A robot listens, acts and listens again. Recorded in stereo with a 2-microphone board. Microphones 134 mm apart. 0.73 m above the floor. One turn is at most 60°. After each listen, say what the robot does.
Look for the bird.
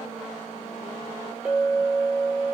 Keep listening.
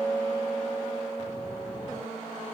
Keep listening.
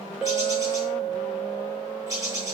Turn 25° right.
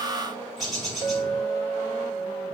Facing the bird.